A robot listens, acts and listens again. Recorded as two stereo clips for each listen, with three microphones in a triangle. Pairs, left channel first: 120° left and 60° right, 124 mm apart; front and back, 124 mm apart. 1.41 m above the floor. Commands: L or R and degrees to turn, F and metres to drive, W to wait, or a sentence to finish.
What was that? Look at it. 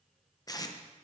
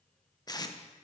L60
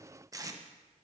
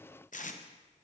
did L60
Found it: tape being pulled, straight ahead.